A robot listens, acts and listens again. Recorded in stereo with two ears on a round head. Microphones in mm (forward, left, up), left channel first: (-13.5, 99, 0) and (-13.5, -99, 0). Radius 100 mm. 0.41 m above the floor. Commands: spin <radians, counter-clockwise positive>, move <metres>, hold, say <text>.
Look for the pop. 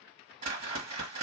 hold
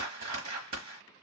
hold
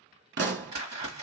spin -0.96
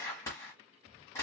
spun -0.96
hold
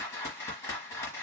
say I heard a pop, but can't make it out now. It was about straight ahead or 70° right.